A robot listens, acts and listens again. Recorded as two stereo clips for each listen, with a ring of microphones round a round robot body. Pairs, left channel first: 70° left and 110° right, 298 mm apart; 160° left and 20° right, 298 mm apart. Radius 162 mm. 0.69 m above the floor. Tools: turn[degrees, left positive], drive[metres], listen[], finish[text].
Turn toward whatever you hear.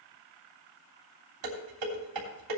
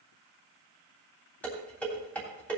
Thought: The dishes clattering: 120° right.
Action: turn[-120]
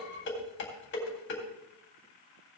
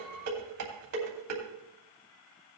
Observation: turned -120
Thought: The dishes clattering is now 15° left.
Action: turn[15]
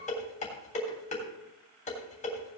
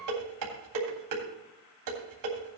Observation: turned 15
Action: finish[Facing the dishes clattering.]